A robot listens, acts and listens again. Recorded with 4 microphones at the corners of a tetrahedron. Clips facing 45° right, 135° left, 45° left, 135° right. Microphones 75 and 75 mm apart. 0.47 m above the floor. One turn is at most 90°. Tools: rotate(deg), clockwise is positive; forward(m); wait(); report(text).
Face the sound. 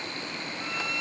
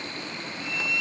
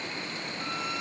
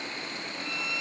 report("Facing the violin, under 1 m away.")